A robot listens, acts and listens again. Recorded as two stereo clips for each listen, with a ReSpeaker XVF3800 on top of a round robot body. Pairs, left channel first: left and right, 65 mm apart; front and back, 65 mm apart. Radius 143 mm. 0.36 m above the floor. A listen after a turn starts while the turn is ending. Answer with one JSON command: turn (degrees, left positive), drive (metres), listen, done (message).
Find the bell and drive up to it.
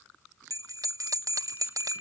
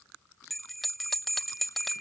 {"turn": -90}
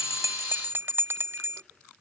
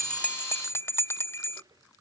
{"turn": -40}
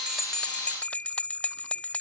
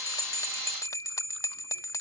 {"turn": 25}
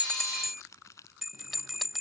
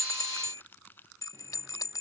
{"drive": 1.0}
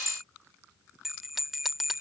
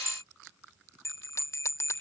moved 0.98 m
{"drive": 1.0}
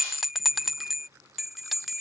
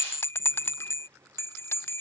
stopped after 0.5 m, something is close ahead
{"done": "Arrived at the bell, straight ahead."}